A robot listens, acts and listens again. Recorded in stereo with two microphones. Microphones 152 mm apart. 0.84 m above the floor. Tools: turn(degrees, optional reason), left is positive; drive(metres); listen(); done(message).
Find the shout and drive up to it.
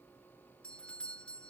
listen()
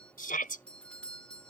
turn(degrees=65, reason="The shout: about 65° left or 115° left.")
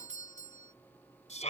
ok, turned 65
turn(degrees=50, reason="So it is at 50° left.")
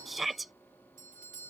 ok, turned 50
drive(metres=1.0)
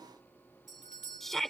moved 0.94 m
drive(metres=1.0)
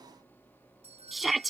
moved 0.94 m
drive(metres=1.0)
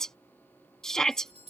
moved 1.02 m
drive(metres=1.0)
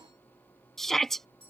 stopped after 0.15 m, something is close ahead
done("Arrived at the shout, straight ahead.")